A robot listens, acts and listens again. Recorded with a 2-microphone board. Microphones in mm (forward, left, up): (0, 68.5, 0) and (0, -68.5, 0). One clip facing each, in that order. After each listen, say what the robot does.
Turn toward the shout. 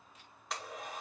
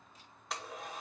Keep listening.
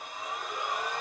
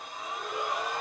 Turn 70° right.
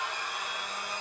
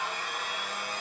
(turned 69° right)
Keep listening.
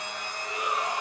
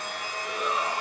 Turn 40° right.
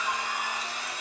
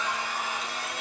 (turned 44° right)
Keep listening.
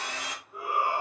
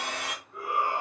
Facing the shout, 2 to 4 m away.